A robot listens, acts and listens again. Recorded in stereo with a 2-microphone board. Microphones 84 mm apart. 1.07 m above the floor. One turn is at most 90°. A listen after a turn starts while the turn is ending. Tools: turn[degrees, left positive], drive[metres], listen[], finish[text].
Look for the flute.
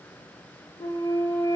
Thought: The flute: about 60° left or 120° left.
Action: turn[60]
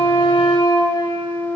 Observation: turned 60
Thought: So it is at 50° left.
Action: turn[50]
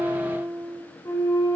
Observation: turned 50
Thought: The flute is now 40° left.
Action: turn[40]
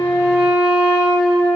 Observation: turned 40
Thought: The flute is now 15° right.
Action: turn[-15]
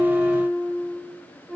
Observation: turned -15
Action: finish[Found it: a flute, straight ahead, 2 to 4 m away.]